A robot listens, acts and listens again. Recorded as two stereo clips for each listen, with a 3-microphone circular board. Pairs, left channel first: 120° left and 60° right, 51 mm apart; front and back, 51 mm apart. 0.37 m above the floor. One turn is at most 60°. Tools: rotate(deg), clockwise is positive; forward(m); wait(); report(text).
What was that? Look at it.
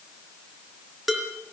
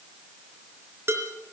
rotate(60)
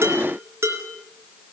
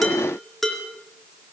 rotate(60)
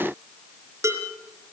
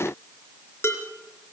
rotate(40)
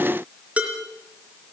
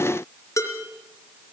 report("Facing the dishes clattering, over 4 m away.")